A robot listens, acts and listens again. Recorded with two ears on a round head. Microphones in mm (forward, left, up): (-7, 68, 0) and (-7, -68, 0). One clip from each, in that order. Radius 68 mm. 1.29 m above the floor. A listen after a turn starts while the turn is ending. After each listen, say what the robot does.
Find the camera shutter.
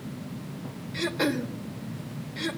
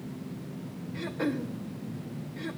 Keep listening.
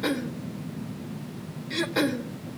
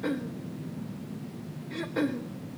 Keep listening.
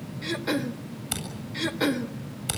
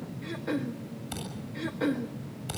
Turn 40° left.
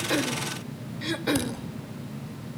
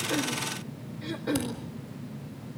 Keep listening.
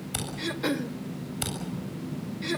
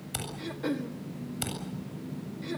Found it: a camera shutter, straight ahead, over 4 m away.